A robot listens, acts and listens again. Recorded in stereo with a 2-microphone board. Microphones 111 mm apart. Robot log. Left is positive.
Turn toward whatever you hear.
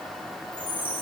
note: The chime: about 50° right or 130° right.
cmd yaw -50
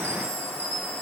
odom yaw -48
note: So it is at 85° right.
cmd yaw -85
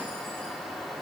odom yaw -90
cmd idle
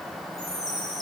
end: Found it: a chime, straight ahead.